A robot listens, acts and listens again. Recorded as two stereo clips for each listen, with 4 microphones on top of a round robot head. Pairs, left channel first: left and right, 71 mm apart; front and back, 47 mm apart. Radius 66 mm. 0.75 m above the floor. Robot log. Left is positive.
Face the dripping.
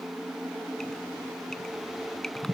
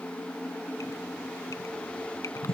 note: The dripping: 10° left.
cmd yaw +10
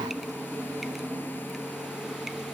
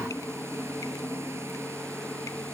cmd idle
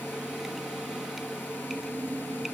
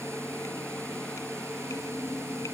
cmd idle
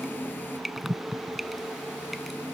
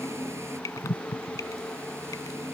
end: Facing the dripping.